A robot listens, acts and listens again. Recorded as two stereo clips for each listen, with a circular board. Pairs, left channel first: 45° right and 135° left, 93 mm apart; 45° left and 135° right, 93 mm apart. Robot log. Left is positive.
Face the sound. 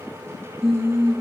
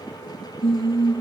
note: The singing: 45° left.
cmd yaw +45
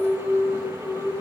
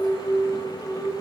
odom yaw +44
end: Facing the singing, 2 to 4 m away.